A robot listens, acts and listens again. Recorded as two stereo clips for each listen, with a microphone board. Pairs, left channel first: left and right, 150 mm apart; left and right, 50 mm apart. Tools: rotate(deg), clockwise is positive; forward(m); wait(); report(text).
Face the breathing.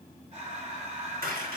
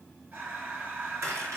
rotate(45)
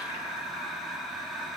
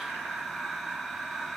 report("Found it: breathing, straight ahead, 2 to 4 m away.")